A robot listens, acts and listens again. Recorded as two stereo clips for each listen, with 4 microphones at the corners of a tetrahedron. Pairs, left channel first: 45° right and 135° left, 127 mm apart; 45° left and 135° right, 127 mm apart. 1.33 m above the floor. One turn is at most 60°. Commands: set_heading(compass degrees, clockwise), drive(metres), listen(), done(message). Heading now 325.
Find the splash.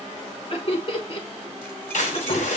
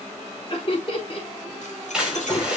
set_heading(15)
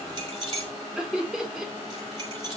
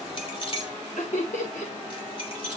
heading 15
done("Facing where the splash came from. I can't hear it now.")